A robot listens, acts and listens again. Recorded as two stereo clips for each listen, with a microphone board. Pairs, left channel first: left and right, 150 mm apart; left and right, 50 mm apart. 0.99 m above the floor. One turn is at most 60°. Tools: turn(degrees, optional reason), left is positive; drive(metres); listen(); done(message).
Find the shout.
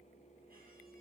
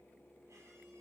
listen()
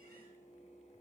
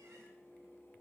listen()
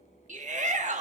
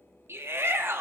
turn(degrees=-55, reason="The shout: about 55° right or 125° right.")
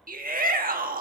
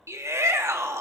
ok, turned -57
turn(degrees=-60, reason="So it is at 70° right.")
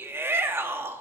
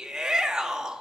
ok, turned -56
turn(degrees=-15, reason="The shout is now 15° right.")
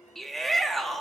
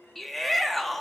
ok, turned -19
done("Found it: a shout, straight ahead, 1 to 2 m away.")